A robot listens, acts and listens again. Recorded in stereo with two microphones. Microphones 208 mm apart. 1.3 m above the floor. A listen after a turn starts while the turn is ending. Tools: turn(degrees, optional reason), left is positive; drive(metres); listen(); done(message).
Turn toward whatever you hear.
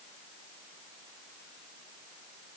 listen()
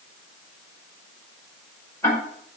turn(degrees=30)
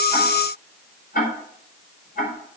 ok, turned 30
turn(degrees=135, reason="So it is at 135° left.")
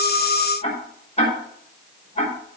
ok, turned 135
turn(degrees=30, reason="The ticking is now 30° left.")
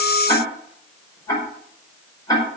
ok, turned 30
turn(degrees=15, reason="The ticking is now 15° left.")
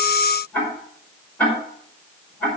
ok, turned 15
turn(degrees=10, reason="The ticking is now 10° left.")
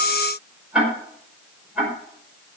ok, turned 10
done("Found it: ticking, straight ahead, over 4 m away.")